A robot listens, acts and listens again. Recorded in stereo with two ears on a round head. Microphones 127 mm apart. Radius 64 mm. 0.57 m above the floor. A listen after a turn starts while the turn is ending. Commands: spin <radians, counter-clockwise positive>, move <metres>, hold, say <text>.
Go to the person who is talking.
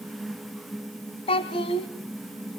spin 0.70
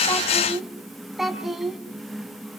move 1.0
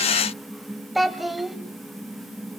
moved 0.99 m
move 1.0
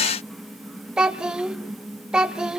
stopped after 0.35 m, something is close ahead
say Arrived at the child speaking, straight ahead.